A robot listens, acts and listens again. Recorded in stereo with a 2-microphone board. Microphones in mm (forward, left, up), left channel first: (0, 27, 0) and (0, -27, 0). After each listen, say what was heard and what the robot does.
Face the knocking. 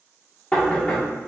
The knocking: about 20° left or 160° left. Turn 20° left.
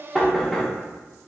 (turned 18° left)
Found it: knocking, straight ahead.